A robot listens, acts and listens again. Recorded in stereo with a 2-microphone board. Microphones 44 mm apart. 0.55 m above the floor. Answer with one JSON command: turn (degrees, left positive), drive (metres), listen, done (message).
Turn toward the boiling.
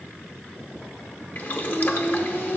{"turn": 45}
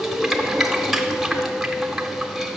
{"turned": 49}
{"done": "Facing the boiling."}